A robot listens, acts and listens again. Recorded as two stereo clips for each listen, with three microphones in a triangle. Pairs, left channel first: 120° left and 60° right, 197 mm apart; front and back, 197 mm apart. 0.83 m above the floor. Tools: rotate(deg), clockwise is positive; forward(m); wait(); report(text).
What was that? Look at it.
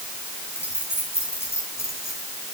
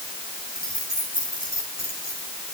rotate(-45)
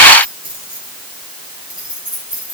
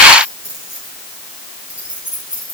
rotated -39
report("Found it: keys jangling, straight ahead, over 4 m away.")